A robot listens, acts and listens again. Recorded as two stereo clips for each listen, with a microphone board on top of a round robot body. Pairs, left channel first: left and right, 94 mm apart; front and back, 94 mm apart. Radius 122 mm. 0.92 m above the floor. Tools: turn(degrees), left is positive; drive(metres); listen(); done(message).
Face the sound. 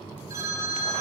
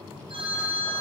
turn(degrees=-150)
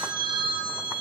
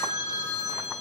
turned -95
turn(degrees=-55)
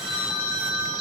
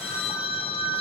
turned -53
done("Found it: a phone ringing, straight ahead.")